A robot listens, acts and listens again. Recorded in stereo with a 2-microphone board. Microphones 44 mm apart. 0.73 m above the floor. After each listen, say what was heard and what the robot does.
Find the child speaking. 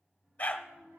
Turn 90° right.
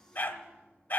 Keep listening.
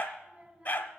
The child speaking is now 20° right. Turn 20° right.
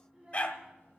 Facing the child speaking, 2 to 4 m away.